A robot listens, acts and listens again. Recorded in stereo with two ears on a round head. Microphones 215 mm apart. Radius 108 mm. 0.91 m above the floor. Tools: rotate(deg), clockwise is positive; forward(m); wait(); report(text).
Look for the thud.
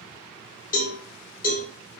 wait()
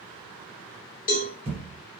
rotate(25)
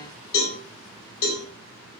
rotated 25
wait()
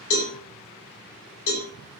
report("I heard a thud, but can't make it out now. It was about straight ahead or 130° right.")